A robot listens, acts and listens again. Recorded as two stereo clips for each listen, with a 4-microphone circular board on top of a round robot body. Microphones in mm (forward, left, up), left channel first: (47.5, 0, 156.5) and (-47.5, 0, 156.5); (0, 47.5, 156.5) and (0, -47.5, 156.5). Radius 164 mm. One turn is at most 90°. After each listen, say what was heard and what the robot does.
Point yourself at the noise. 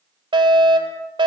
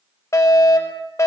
The fire alarm: 145° left. Turn 90° left.
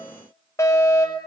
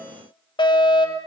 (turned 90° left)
The fire alarm is now 60° left. Turn 60° left.
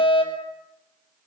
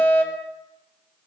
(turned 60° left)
The fire alarm is now 20° left. Turn 20° left.
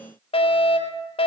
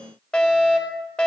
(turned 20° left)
The fire alarm is now 10° left. Turn 10° left.
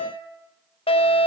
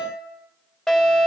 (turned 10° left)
Facing the fire alarm, over 4 m away.